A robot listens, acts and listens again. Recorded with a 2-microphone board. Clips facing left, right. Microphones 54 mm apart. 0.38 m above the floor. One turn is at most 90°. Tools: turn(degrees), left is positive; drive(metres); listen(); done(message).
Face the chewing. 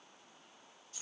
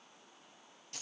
listen()
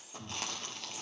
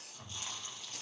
turn(degrees=75)
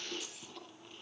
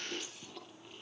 done("Facing the chewing.")